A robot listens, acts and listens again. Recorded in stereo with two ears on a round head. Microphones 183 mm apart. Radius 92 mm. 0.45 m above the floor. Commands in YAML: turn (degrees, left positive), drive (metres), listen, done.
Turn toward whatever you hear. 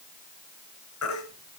turn: 90
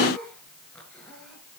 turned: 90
listen: true
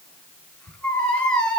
done: "Facing the baby crying."